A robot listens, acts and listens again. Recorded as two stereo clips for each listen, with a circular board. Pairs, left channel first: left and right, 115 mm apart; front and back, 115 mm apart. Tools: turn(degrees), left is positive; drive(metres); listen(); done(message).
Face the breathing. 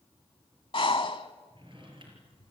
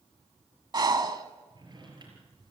turn(degrees=130)
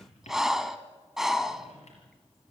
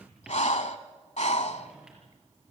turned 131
done("Found it: breathing, straight ahead.")